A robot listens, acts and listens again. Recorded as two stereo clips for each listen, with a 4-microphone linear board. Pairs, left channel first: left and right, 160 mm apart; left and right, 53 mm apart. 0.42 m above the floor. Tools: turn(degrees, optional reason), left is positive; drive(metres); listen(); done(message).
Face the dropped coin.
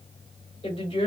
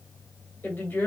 listen()
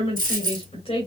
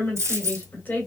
turn(degrees=-60, reason="The dropped coin: about 60° right or 120° right.")
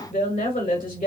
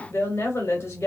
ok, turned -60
listen()
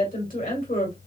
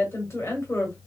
done("I heard a dropped coin, but can't make it out now. It was about straight ahead or 60° right.")